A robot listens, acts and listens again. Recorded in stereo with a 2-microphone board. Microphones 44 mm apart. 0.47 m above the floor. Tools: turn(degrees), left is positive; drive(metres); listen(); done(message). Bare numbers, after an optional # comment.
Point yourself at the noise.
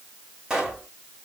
turn(-30)
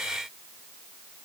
listen()
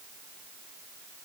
done("I heard a pop, but can't make it out now. It was about 15° left or 135° right.")